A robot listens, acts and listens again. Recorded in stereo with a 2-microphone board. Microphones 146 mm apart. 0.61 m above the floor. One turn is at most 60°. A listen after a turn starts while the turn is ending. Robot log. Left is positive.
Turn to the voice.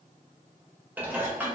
cmd idle
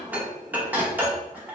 cmd idle
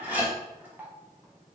end: I can't make out anyone speaking to turn to.